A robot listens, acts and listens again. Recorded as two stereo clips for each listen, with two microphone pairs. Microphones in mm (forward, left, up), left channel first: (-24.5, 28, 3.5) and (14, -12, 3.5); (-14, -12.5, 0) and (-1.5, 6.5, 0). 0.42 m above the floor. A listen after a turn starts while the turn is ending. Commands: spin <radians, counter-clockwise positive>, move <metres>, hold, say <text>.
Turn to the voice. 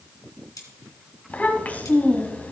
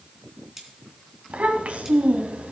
spin 1.31
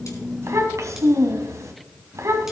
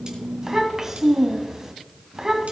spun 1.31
spin -0.26
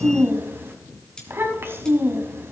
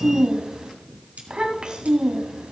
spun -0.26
say Facing the child speaking.